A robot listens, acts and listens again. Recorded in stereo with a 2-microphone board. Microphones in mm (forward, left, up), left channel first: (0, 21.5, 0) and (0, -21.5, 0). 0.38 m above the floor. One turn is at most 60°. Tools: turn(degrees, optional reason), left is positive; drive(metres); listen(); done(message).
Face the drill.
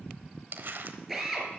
turn(degrees=-30)
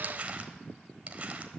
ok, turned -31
listen()
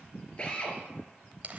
turn(degrees=25, reason="So it is at 25° left.")
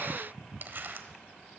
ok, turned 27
listen()
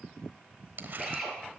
done("Facing the drill.")